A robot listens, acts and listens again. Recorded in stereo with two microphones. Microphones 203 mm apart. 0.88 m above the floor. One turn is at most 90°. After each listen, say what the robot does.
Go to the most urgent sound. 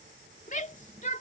Turn 40° left.
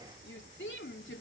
Turn 90° left.
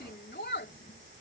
Turn 60° left.
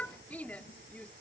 Drive 1.0 m forward.
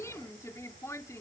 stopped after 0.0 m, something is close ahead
Turn 15° left.
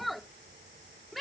Blocked. The shout is further on, straight ahead.